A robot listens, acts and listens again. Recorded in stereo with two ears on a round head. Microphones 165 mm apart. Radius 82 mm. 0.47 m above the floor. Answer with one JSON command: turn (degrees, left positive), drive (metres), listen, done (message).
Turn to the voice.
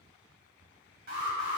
{"listen": true}
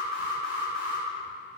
{"listen": true}
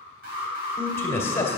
{"turn": 30}
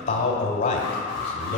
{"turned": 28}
{"turn": 135}
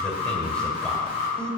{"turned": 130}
{"done": "Found it: a man speaking, straight ahead."}